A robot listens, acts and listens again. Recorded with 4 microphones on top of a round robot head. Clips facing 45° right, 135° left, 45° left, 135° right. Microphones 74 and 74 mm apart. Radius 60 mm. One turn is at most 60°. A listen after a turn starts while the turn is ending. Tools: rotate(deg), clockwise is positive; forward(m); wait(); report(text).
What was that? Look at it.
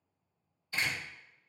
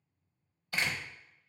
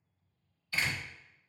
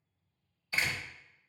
rotate(-60)
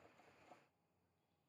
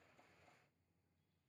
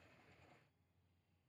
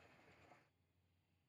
rotate(-60)
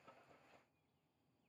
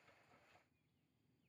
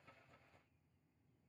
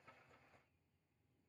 rotate(-35)
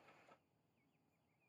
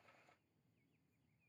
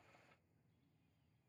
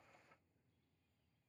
report("I heard a door slam from this way, but can't make it out now.")